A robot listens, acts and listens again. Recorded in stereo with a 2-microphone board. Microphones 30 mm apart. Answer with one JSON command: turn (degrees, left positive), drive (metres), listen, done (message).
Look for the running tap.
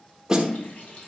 {"turn": 70}
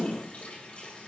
{"turn": 45}
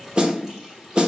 {"turn": -10}
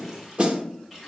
{"done": "Found it: a running tap, straight ahead, 2 to 4 m away."}